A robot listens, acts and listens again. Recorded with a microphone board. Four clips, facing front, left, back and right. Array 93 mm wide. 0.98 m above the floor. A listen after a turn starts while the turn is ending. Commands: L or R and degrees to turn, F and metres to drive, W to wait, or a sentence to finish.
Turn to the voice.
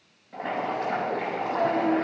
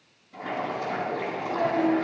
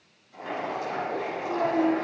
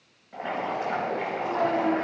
R80
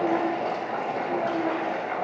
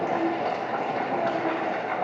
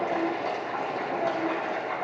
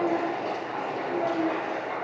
L25
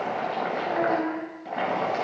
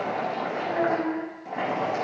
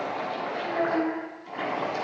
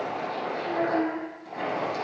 R10
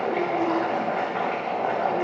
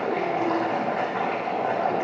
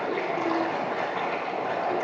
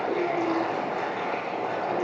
W
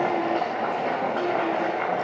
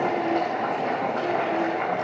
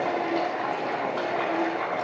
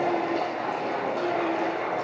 W
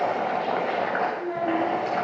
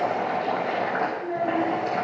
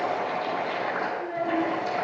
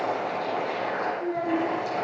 Facing the child speaking.